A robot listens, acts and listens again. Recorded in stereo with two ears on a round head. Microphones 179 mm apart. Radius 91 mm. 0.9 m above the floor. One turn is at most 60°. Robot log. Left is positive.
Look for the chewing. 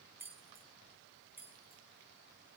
cmd idle
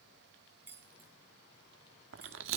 note: The chewing: about 65° right or 115° right.
cmd yaw -60
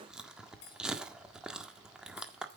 end: Facing the chewing, 1 to 2 m away.